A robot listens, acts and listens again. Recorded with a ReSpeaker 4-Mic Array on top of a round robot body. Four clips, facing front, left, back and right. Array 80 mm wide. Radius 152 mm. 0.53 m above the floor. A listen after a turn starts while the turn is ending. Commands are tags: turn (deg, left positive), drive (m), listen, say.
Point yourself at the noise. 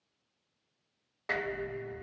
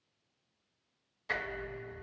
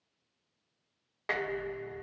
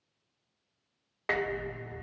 <turn deg="-110"/>
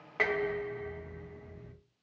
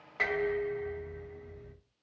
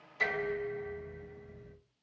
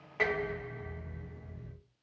<turn deg="25"/>
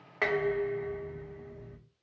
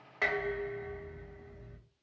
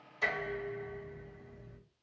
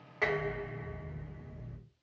<say>Found it: dishes clattering, straight ahead.</say>